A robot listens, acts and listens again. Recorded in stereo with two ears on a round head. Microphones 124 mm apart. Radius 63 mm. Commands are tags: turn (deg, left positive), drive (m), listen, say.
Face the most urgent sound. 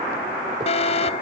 <turn deg="50"/>
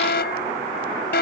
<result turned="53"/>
<turn deg="75"/>
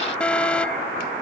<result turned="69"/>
<turn deg="10"/>
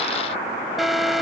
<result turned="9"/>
<say>Facing the alarm.</say>